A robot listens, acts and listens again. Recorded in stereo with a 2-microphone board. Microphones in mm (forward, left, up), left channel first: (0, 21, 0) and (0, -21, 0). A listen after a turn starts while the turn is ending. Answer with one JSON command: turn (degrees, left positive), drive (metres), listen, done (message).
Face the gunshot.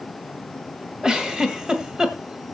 {"listen": true}
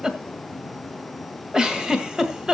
{"listen": true}
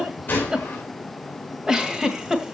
{"turn": 45}
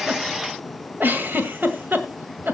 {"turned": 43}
{"listen": true}
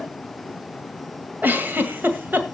{"done": "I heard a gunshot, but can't make it out now. It was about straight ahead or 95° left."}